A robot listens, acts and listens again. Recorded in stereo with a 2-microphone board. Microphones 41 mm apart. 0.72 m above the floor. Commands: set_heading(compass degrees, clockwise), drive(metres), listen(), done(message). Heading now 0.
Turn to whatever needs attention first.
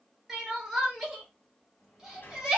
set_heading(30)
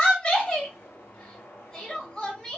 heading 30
set_heading(10)
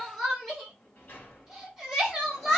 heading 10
done("Facing the crying.")